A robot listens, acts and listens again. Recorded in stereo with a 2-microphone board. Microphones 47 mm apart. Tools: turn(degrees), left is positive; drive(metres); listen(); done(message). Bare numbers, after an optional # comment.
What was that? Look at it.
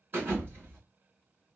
# The thud: about 45° right or 135° right.
turn(-45)
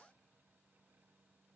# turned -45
listen()
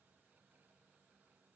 done("I heard a thud, but can't make it out now. It was about straight ahead or 90° right.")